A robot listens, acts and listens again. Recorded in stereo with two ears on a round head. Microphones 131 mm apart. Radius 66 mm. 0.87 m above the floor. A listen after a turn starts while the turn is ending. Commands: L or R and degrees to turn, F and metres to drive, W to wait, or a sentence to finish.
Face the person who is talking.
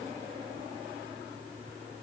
W
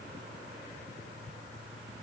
W
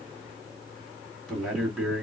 L30
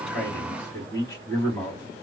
L150
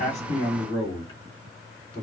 L25
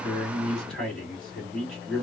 Facing the man speaking.